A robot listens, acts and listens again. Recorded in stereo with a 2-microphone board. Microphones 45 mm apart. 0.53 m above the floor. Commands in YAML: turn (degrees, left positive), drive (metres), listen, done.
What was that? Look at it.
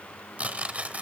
turn: -25
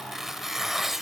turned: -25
done: "Found it: tearing paper, straight ahead, under 1 m away."